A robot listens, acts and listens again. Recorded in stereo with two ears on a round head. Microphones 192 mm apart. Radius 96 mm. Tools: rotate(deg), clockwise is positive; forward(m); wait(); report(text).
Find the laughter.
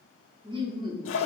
rotate(20)
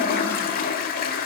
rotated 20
wait()
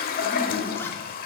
wait()
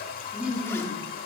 rotate(10)
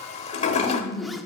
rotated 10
report("Facing the laughter.")